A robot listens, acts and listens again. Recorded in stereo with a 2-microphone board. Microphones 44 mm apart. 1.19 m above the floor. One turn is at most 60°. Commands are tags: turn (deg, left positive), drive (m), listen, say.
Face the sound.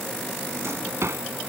<turn deg="-60"/>
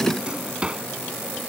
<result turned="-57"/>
<turn deg="-20"/>
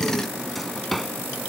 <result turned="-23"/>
<say>Facing the drawer.</say>